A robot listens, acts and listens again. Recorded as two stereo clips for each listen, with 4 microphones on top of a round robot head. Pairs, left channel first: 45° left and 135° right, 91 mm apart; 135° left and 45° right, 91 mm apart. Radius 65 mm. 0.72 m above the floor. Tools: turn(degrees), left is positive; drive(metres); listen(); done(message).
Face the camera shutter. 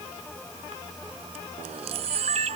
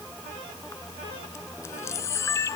turn(degrees=-160)
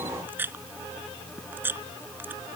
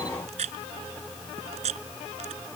turn(degrees=-65)
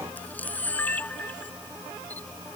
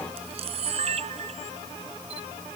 turn(degrees=-30)
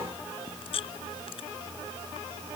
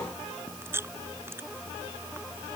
turn(degrees=20)
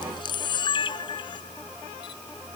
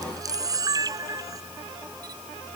done("Facing the camera shutter.")